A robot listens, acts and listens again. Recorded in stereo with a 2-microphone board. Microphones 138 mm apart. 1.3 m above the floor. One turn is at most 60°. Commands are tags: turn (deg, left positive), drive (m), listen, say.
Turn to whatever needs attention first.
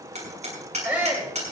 <turn deg="-30"/>
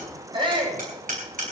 <turn deg="-60"/>
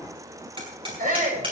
<turn deg="-60"/>
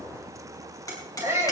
<turn deg="-20"/>
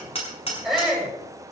<say>Facing the shout, over 4 m away.</say>